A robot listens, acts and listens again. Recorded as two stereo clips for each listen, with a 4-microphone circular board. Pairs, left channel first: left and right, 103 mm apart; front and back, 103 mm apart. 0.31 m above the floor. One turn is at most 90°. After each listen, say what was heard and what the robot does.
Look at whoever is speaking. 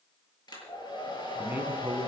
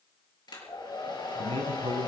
The man speaking: 160° right. Turn 90° right.
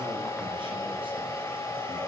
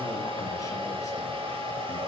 Nothing new. It was at 70° right. Turn 70° right.
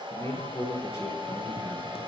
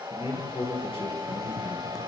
The man speaking is now 30° left. Turn 30° left.
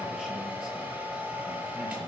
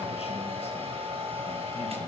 Keep listening.
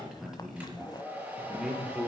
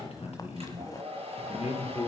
Found it: a man speaking, straight ahead, over 4 m away.